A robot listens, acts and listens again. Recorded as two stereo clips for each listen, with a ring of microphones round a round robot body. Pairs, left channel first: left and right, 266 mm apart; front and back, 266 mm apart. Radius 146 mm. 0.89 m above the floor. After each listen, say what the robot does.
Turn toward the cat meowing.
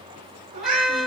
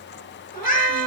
Turn 60° right.
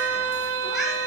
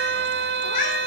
Facing the cat meowing, over 4 m away.